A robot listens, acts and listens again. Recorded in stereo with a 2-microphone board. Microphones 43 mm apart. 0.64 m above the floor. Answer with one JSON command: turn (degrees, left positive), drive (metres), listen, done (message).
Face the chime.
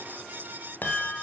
{"turn": 45}
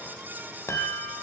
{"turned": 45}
{"turn": 90}
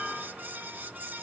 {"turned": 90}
{"turn": -30}
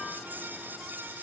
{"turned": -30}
{"listen": true}
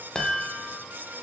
{"turn": 15}
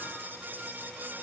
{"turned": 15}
{"listen": true}
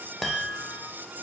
{"done": "Facing the chime, 2 to 4 m away."}